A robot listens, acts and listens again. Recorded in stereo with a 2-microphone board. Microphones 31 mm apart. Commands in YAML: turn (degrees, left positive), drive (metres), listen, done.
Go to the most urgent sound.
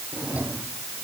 listen: true
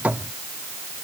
listen: true
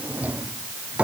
done: "I can't make out anything urgent, only a drawer."